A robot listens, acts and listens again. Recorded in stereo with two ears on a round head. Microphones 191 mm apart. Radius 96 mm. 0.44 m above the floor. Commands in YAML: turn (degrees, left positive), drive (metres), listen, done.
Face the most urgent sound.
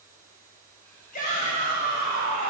turn: 40
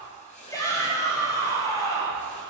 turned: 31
turn: 20
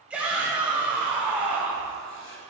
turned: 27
done: "Found it: a shout, straight ahead."